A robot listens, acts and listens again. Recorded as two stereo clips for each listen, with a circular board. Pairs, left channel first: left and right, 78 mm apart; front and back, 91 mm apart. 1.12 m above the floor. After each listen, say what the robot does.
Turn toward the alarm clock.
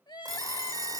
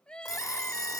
Turn 50° right.
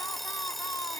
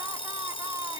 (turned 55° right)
Facing the alarm clock.